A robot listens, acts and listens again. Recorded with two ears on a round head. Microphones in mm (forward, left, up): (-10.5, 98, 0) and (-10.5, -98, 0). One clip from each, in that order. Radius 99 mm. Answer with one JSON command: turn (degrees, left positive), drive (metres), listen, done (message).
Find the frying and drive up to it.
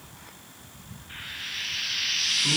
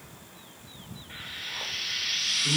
{"turn": 30}
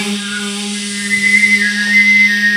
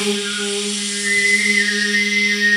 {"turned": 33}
{"listen": true}
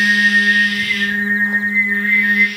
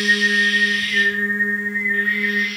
{"listen": true}
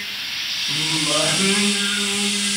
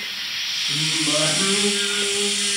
{"turn": -20}
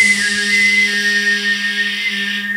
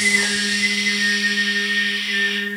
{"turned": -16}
{"listen": true}
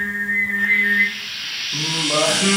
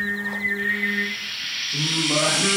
{"drive": 1.0}
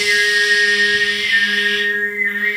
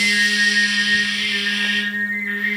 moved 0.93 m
{"listen": true}
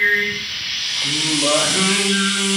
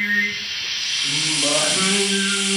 {"drive": 1.0}
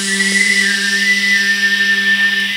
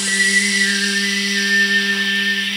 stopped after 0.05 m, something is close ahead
{"listen": true}
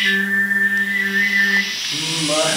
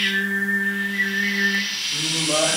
{"done": "I am next to the frying."}